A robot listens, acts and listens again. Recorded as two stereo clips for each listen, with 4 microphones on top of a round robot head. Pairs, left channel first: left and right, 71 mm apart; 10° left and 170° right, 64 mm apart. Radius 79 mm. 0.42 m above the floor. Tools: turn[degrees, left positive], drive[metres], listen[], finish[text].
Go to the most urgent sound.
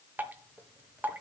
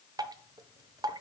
Action: listen[]
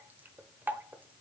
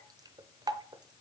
Action: listen[]
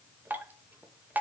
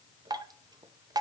Action: finish[I can't make out anything urgent to turn to.]